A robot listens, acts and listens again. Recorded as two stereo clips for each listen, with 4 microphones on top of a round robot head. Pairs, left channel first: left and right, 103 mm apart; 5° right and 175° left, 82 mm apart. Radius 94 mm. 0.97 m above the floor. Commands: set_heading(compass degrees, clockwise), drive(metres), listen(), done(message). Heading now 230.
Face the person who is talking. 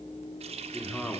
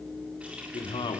done("Found it: a man speaking, straight ahead.")